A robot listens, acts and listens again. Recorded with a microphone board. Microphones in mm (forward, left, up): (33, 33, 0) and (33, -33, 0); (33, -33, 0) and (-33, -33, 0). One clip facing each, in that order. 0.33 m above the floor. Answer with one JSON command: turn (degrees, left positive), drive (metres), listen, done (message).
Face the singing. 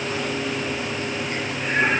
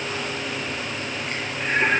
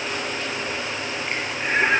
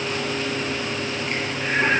{"turn": -40}
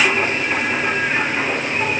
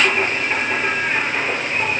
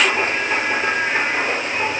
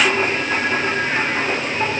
{"turn": -25}
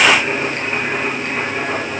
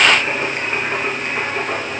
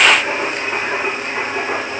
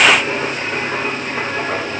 {"turn": -15}
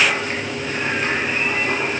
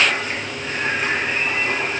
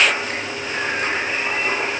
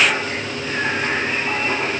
{"done": "Found it: singing, straight ahead, over 4 m away."}